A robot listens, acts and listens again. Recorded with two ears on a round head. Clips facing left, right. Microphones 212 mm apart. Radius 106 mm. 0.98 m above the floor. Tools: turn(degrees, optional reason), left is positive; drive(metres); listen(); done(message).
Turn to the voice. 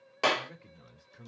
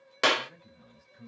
turn(degrees=70, reason="The man speaking: about 70° left or 110° left.")
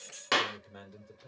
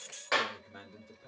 done("Found it: a man speaking, straight ahead, 2 to 4 m away.")